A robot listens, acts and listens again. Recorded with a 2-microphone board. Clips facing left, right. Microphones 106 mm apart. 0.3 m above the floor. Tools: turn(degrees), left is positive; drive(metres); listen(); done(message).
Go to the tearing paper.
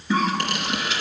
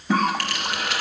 turn(degrees=20)
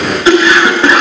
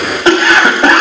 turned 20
listen()
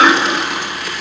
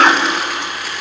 drive(metres=1.0)
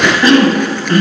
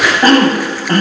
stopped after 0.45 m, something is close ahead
listen()
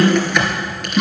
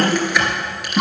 done("Something is in my way. I am facing the tearing paper but have not reached it.")